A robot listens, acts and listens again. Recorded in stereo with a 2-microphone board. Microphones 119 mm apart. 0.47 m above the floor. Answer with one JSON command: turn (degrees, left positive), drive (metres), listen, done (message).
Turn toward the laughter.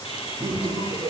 {"turn": -30}
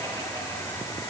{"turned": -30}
{"listen": true}
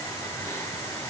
{"listen": true}
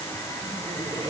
{"done": "I heard laughter, but can't make it out now. It was about 25° left or 145° right."}